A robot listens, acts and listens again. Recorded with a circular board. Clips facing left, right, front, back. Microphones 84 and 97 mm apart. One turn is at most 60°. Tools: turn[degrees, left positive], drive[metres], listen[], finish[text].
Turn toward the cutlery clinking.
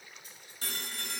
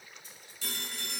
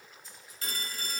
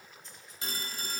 Action: listen[]
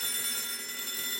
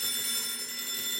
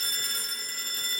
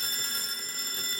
Action: listen[]
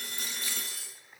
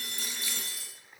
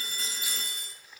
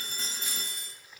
Thought: The cutlery clinking: 80° left.
Action: turn[60]
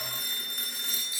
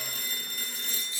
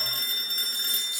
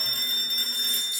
Thought: The cutlery clinking is now 10° left.
Action: turn[10]
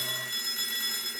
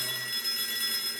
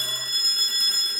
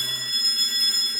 Action: listen[]
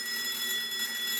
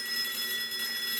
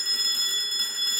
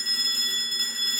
Action: listen[]
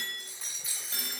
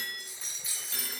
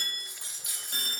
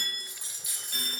Action: finish[Found it: cutlery clinking, straight ahead.]